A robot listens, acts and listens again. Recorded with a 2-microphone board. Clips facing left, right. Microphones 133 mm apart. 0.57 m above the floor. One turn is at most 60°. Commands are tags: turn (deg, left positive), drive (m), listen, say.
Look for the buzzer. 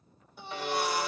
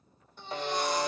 <turn deg="-40"/>
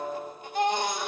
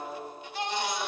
<listen/>
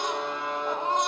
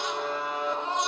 <say>Found it: a buzzer, straight ahead, under 1 m away.</say>